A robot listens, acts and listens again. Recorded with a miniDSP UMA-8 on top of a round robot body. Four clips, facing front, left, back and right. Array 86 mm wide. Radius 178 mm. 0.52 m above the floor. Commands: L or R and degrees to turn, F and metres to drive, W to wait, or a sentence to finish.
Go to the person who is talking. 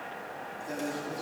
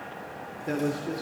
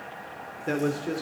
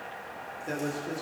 L170
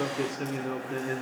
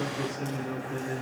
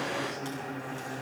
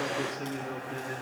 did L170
R10
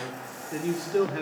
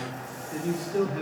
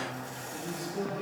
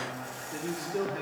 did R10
F1.0
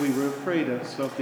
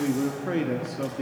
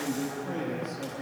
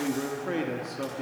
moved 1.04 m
F1.0
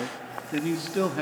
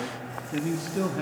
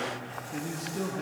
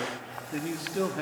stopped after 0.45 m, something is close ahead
R10
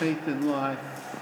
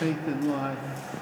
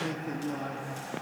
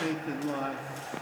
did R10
Arrived at the man speaking, straight ahead.